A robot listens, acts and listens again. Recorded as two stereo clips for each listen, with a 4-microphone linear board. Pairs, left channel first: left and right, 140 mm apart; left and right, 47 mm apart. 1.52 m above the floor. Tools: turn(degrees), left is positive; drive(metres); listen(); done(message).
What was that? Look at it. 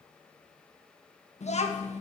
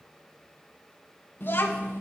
turn(degrees=55)
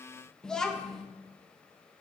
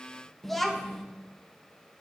done("Found it: a child speaking, straight ahead.")